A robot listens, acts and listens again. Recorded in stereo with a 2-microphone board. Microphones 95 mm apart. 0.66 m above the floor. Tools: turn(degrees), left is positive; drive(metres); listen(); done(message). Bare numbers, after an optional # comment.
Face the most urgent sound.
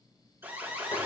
# The alarm: about 25° right or 155° right.
turn(-25)
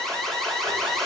done("Facing the alarm, 2 to 4 m away.")